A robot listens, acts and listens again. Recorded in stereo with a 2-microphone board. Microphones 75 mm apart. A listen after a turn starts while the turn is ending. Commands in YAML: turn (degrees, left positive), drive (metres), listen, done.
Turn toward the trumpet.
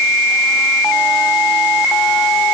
listen: true
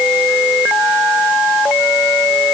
listen: true
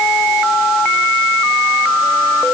done: "I can't make out a trumpet to turn to."